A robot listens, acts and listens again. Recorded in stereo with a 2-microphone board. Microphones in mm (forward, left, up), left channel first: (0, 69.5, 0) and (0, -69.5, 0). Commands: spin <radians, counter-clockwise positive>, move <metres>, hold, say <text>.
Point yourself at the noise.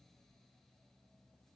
hold
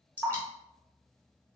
spin 0.52
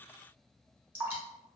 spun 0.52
spin -0.26
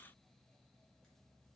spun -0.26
hold
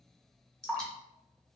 say Facing the dripping.